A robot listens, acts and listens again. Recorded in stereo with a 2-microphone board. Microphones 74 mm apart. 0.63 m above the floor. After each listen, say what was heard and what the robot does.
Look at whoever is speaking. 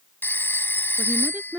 The woman speaking: about 25° right or 155° right. Turn 25° right.
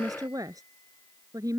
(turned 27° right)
So it is at 130° right. Turn 130° right.
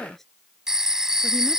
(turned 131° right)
Facing the woman speaking.